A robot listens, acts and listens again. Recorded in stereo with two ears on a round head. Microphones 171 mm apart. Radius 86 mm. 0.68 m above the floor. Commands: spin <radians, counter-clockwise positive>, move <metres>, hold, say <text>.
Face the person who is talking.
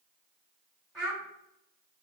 spin 0.52
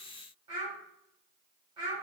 spin -0.44
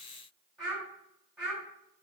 say Facing the child speaking, 1 to 2 m away.